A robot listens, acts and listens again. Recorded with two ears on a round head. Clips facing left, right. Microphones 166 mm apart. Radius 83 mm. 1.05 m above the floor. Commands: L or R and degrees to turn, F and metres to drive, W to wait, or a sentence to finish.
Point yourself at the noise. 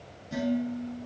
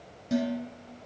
R90
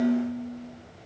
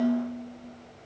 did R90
R10
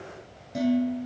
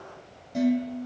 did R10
Found it: dishes clattering, straight ahead.